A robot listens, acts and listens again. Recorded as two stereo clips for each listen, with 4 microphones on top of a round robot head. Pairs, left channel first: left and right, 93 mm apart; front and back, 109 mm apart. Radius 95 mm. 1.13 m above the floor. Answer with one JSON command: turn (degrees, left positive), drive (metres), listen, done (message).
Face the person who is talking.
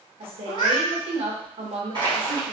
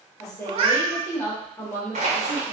{"turn": -70}
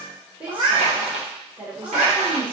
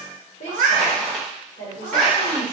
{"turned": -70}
{"turn": -15}
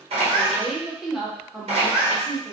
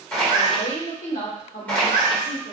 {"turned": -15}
{"done": "Found it: a woman speaking, straight ahead, 1 to 2 m away."}